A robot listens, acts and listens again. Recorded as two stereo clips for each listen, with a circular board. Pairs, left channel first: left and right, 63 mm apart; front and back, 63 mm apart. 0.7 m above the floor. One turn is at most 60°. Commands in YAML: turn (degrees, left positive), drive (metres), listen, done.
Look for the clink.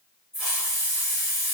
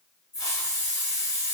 listen: true
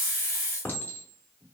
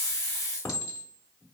turn: 30
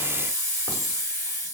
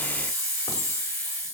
listen: true
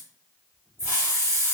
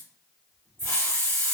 listen: true
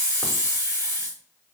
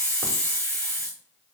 done: "I heard a clink from this way, but can't make it out now."